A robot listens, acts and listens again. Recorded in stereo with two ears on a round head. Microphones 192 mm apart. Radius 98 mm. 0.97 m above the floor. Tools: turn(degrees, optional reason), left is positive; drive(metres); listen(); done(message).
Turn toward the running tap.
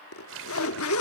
turn(degrees=-60, reason="The running tap: about 60° right or 120° right.")
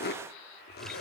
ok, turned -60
listen()
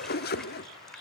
listen()
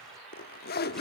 done("I heard a running tap, but can't make it out now. It was about straight ahead or 60° right.")